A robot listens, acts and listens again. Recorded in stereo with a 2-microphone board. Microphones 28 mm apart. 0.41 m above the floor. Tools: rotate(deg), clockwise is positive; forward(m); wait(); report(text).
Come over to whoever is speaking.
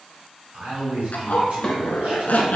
rotate(55)
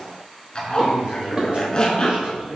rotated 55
rotate(60)
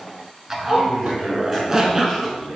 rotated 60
rotate(10)
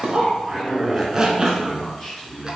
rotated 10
forward(1.0)
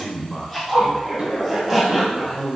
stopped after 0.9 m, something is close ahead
report("Arrived at the man speaking, straight ahead.")